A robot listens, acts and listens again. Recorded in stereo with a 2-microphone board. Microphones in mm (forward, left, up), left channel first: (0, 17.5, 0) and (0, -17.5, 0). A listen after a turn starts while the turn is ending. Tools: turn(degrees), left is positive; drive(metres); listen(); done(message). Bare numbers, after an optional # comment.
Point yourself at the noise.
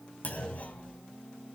# The clunk: about 45° left or 135° left.
turn(45)
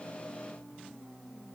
listen()
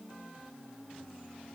done("I heard a clunk, but can't make it out now. It was about straight ahead or 90° left.")